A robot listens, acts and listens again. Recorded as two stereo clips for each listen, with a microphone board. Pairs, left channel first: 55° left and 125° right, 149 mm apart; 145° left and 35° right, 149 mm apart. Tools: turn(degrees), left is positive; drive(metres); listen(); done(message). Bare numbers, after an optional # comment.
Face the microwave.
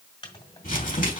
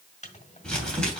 # The microwave: 110° left.
turn(110)
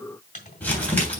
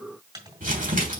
# The microwave is now 25° left.
turn(25)
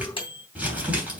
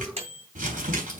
done("Facing the microwave, 1 to 2 m away.")